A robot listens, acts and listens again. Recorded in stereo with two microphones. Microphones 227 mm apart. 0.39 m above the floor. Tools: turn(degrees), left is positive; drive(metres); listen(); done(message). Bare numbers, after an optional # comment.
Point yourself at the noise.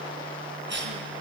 # The cough: about 55° right or 125° right.
turn(-55)
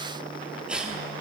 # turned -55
done("Found it: a cough, straight ahead.")